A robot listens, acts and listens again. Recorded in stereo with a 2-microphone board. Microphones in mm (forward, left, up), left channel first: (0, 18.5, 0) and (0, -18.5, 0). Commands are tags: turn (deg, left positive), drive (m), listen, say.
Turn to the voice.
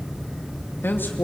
<turn deg="70"/>
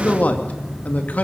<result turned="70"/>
<turn deg="45"/>
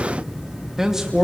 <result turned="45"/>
<turn deg="-15"/>
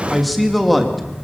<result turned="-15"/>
<say>Facing the man speaking.</say>